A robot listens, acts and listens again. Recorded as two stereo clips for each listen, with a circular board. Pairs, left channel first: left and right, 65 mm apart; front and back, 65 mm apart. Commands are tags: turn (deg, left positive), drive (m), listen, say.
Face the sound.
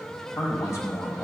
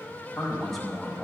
<turn deg="95"/>
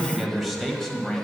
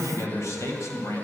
<turn deg="20"/>
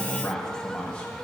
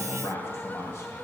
<turn deg="25"/>
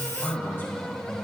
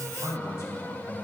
<turn deg="40"/>
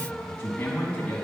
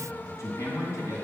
<turn deg="20"/>
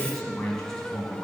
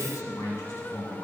<turn deg="10"/>
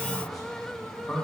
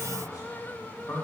<say>Facing the man speaking.</say>